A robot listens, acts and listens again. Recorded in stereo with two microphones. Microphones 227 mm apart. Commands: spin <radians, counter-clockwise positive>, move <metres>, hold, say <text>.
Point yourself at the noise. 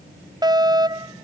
spin -0.26
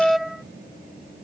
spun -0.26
say Facing the fire alarm.